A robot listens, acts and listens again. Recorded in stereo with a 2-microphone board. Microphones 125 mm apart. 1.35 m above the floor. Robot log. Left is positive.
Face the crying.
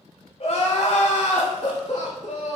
note: The crying: about 65° left or 115° left.
cmd yaw +65
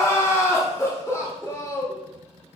note: So it is at 25° left.
cmd yaw +25
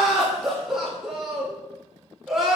end: Found it: crying, straight ahead, 1 to 2 m away.